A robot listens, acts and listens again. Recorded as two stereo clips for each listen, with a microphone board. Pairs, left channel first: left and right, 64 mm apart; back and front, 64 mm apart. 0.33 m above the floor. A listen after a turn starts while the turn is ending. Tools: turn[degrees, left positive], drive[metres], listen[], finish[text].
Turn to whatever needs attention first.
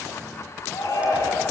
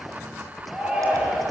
Thought: The shout: 75° left.
Action: turn[75]
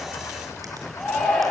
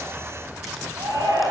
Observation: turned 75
Action: finish[Facing the shout, over 4 m away.]